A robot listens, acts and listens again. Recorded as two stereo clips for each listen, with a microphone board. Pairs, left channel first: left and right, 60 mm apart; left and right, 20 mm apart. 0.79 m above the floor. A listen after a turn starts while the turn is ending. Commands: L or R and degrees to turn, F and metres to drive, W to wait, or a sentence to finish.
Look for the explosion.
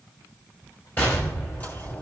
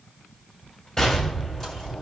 L35
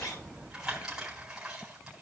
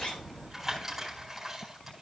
W
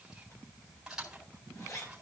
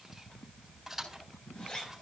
I heard an explosion, but can't make it out now. It was about straight ahead or 110° left.